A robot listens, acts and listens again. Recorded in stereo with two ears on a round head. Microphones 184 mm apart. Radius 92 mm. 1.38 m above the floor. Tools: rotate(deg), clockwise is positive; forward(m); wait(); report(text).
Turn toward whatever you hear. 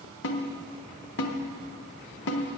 rotate(-60)
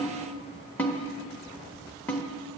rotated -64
rotate(-10)
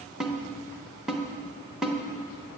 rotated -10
report("Facing the snare drum, 1 to 2 m away.")